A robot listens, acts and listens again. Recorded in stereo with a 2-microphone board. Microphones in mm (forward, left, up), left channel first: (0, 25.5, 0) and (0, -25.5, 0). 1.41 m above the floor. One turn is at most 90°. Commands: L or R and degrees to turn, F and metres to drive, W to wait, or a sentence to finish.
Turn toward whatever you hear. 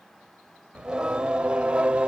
R20
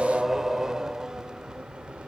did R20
R20
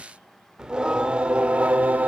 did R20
R30
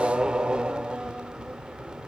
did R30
R15
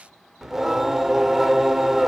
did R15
R30
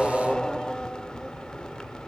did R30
L15
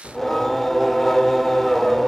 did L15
Found it: singing, straight ahead.